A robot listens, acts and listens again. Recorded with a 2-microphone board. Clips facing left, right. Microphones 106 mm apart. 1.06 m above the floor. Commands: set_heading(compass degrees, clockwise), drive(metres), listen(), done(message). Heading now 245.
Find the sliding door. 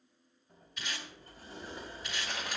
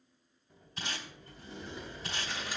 set_heading(205)
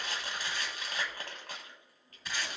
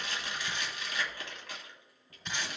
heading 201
done("Facing the sliding door.")